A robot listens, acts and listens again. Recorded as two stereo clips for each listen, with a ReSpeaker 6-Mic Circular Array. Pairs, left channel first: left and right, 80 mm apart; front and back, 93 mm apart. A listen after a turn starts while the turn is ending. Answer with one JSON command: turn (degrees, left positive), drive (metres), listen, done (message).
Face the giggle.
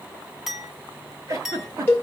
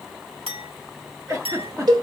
{"turn": -130}
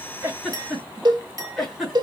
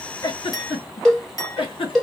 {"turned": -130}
{"done": "Facing the giggle, 2 to 4 m away."}